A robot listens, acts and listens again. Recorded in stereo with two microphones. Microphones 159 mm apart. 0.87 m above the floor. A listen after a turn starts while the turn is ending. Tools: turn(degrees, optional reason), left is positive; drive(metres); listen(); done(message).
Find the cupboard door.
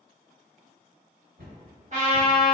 turn(degrees=-90)
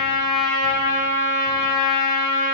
listen()
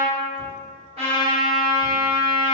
listen()
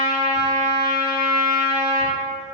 done("I heard a cupboard door from this way, but can't make it out now.")